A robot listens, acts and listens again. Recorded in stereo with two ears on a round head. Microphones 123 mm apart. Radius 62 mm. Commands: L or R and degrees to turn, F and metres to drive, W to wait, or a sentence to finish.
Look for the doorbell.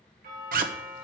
R65
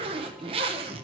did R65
W
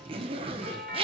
Facing the doorbell.